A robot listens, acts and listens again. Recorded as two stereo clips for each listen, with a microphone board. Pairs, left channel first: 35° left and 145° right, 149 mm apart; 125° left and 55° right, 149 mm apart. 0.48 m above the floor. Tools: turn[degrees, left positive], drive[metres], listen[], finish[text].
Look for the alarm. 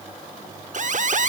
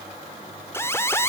Thought: The alarm: 165° right.
Action: turn[-165]
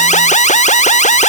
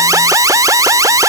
Thought: The alarm is now 10° left.
Action: turn[10]
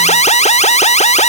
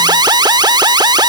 Action: finish[Found it: an alarm, straight ahead.]